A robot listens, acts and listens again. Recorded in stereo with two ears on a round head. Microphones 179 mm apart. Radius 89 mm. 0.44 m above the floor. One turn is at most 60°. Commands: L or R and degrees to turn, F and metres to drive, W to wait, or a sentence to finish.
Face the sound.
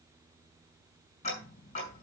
L35
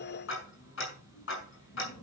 L60
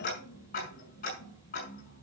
L45
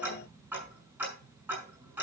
R10
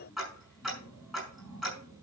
Facing the ticking.